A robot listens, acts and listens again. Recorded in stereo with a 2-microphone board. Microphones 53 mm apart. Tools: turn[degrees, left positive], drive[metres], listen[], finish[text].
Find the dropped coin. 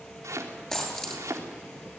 Action: turn[30]
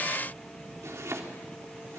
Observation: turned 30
Action: listen[]
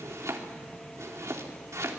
Action: finish[I heard a dropped coin, but can't make it out now. It was about 20° right or 140° left.]